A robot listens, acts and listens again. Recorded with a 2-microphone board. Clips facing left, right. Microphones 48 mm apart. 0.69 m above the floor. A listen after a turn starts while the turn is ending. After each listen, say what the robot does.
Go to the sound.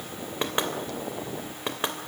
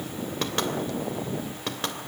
Turn 20° left.
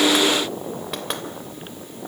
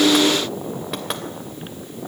Drive 1.0 m forward.
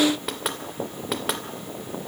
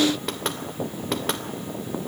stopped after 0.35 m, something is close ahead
Blocked. The knocking is further on, straight ahead.